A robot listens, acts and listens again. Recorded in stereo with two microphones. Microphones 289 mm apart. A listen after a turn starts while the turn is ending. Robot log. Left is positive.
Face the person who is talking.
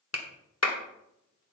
cmd idle
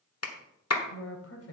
note: The woman speaking: about 50° left or 130° left.
cmd yaw +50
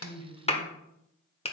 cmd idle
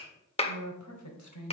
note: So it is at 80° left.
cmd yaw +80
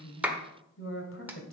note: The woman speaking is now 45° left.
cmd yaw +45
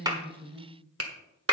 note: The woman speaking is now 10° right.
cmd yaw -10
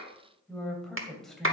end: Facing the woman speaking.